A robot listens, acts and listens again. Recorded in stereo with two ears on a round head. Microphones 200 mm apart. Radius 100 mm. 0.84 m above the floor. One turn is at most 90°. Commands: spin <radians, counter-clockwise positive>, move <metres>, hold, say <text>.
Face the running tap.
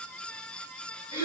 hold
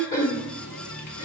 spin 1.57
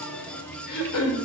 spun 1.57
spin 0.17
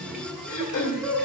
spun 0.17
say Facing the running tap, 1 to 2 m away.